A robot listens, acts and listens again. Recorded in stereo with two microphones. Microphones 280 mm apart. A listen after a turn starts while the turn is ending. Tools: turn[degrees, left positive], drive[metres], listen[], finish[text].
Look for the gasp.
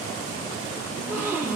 Action: turn[-30]
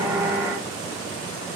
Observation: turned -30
Action: listen[]
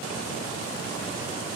Action: finish[I heard a gasp, but can't make it out now. It was about 25° left or 145° right.]